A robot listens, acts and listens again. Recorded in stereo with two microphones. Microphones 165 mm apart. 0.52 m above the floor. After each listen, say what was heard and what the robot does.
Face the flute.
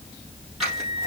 The flute: about 35° left or 145° left. Turn 35° left.
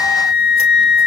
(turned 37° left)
So it is at 110° left. Turn 110° left.
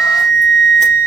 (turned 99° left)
The flute is now 10° left. Turn 10° left.
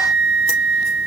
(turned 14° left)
Found it: a flute, straight ahead, 2 to 4 m away.